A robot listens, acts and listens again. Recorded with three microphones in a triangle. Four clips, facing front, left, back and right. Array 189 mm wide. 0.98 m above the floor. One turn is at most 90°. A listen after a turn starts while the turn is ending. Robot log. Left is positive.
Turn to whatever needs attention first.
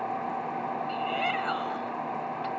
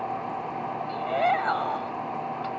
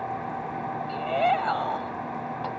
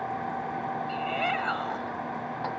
note: The shout: 150° left.
cmd yaw +90
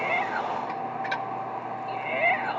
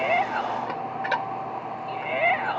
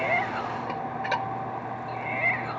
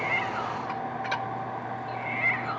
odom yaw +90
note: The shout is now 60° left.
cmd yaw +60
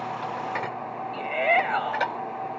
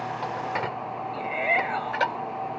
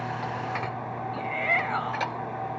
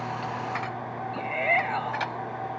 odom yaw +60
end: Facing the shout.